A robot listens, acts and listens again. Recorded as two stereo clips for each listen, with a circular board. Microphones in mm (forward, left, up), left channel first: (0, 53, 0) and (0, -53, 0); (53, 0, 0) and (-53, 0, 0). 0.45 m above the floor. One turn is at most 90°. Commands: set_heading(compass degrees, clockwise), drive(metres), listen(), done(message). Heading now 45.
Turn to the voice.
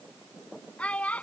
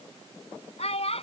set_heading(30)
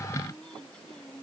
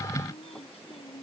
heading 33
set_heading(23)
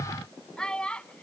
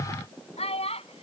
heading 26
set_heading(16)
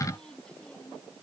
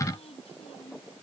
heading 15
listen()
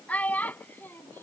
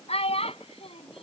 set_heading(355)
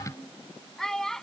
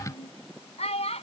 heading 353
done("Facing the child speaking.")